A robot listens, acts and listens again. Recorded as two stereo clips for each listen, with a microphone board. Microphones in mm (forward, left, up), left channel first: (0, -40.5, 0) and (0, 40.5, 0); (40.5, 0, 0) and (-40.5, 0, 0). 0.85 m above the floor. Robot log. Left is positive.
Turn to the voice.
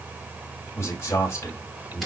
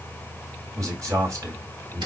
note: The man speaking: 140° right.
cmd yaw -140
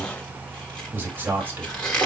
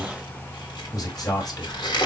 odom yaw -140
note: The man speaking is now 30° left.
cmd yaw +30
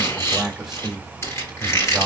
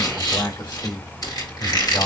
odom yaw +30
end: Facing the man speaking, 1 to 2 m away.